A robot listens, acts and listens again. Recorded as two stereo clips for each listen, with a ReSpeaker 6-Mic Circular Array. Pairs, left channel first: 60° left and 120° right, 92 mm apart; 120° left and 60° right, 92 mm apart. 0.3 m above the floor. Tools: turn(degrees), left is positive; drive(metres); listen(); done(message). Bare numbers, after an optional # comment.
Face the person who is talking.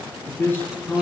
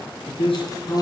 # The man speaking: 130° left.
turn(130)
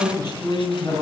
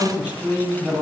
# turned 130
# The man speaking is now 20° left.
turn(20)
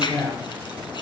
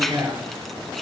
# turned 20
done("Found it: a man speaking, straight ahead, over 4 m away.")